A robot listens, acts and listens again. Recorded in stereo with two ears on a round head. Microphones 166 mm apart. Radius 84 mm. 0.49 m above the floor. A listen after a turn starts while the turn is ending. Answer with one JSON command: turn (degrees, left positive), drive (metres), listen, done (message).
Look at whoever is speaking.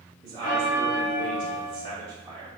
{"turn": -20}
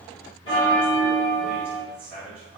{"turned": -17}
{"done": "Facing the man speaking, 1 to 2 m away."}